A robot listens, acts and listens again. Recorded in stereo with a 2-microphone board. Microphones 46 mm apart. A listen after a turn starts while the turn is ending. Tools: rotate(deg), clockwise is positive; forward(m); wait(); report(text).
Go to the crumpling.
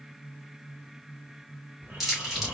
rotate(30)
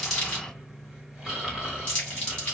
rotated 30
rotate(-25)
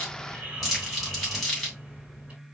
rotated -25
forward(1.0)
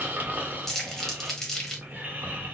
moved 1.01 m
rotate(-10)
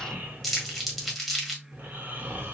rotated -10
forward(1.0)
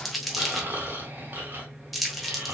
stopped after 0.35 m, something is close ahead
report("I am next to the crumpling.")